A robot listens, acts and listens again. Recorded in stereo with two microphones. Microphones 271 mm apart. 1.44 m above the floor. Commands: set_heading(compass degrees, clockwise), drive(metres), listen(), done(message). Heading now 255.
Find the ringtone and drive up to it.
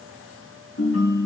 set_heading(190)
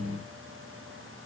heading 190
listen()
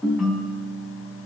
drive(1.0)
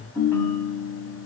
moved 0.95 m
set_heading(180)
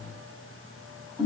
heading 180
drive(1.0)
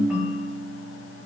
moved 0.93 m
drive(1.0)
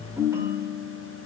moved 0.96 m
set_heading(190)
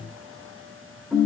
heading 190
drive(1.0)
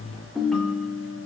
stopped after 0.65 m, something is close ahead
done("I am next to the ringtone.")